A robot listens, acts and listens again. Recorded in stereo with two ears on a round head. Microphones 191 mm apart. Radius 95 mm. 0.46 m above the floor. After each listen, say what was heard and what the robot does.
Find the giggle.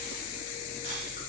Keep listening.
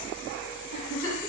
The giggle: about 60° left or 120° left. Turn 60° left.
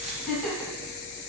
Found it: a giggle, straight ahead, 1 to 2 m away.